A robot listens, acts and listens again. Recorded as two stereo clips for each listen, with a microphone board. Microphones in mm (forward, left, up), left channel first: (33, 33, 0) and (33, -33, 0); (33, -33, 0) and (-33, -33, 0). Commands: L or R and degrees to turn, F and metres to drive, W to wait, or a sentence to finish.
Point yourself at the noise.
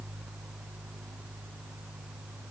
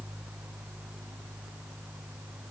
W
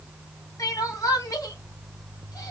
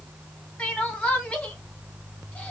L70
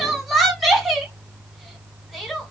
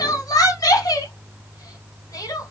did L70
Facing the crying.